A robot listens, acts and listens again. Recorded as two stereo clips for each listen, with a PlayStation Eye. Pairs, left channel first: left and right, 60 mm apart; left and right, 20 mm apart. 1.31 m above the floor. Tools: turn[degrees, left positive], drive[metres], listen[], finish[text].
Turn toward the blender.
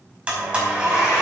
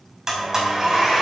Thought: The blender: about 20° right or 160° right.
Action: turn[-20]
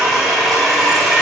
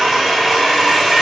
Action: finish[Found it: a blender, straight ahead.]